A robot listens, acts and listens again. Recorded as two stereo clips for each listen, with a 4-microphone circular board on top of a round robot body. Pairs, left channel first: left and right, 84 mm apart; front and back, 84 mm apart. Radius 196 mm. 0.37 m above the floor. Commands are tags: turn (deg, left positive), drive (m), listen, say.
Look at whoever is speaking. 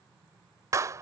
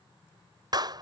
<listen/>
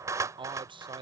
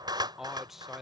<turn deg="-90"/>
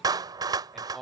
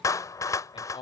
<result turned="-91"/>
<say>Found it: a man speaking, straight ahead.</say>